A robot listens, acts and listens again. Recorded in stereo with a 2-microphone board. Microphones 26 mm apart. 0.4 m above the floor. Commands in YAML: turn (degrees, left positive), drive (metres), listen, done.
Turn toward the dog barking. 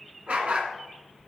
turn: -50
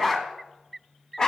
turn: 30
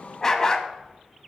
turn: 35
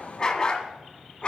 turn: 40
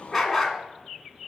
done: "Facing the dog barking, 1 to 2 m away."